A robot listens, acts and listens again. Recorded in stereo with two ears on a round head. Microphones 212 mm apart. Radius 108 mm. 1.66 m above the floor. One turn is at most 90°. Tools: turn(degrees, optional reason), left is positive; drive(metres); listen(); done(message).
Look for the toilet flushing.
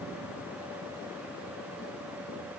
listen()
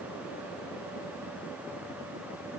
listen()
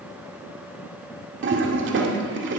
turn(degrees=-55, reason="The toilet flushing: about 55° right or 125° right.")
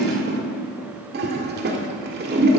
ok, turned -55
turn(degrees=-55, reason="So it is at 55° right.")
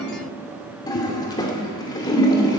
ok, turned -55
turn(degrees=20, reason="The toilet flushing is now 20° left.")
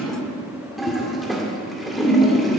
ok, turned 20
done("Facing the toilet flushing.")